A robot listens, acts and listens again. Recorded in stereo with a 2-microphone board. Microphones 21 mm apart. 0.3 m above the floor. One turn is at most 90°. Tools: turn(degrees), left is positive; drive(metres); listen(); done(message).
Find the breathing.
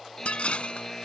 listen()
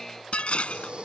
turn(degrees=-55)
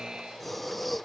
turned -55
done("Facing the breathing.")